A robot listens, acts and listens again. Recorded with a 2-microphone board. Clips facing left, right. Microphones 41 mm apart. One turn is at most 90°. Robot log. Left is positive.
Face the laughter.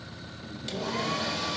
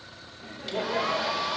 note: The laughter: about 70° right or 110° right.
cmd yaw -70
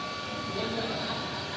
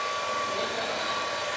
note: So it is at 15° right.
cmd yaw -15
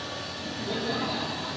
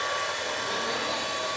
note: The laughter is now 15° left.
cmd yaw +15
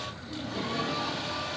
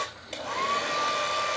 cmd idle
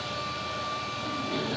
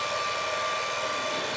cmd idle
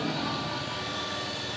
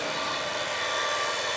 end: I heard laughter from this way, but can't make it out now.